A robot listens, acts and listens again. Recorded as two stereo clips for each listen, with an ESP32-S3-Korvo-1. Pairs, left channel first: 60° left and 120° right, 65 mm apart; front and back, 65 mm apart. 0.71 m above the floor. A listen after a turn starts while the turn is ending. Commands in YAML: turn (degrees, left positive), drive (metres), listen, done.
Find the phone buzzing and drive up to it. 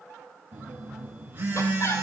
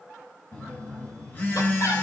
turn: -60
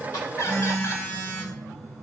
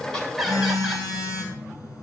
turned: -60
drive: 1.0
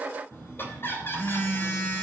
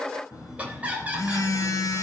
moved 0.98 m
drive: 1.0
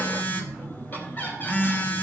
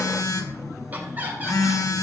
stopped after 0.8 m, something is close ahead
done: "I am next to the phone buzzing."